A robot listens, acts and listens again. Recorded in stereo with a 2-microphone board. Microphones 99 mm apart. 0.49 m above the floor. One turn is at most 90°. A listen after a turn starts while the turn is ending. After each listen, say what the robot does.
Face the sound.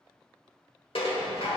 Turn 65° left.
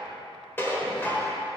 Turn 25° left.
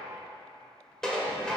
Found it: dishes clattering, straight ahead, 1 to 2 m away.